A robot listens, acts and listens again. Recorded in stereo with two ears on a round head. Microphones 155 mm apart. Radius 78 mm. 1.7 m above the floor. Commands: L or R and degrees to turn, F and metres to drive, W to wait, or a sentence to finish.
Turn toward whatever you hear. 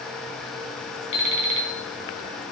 L40
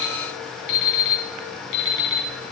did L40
L100
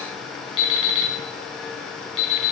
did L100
L30
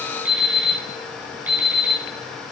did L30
R10
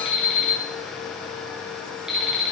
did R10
Found it: an alarm clock, straight ahead, over 4 m away.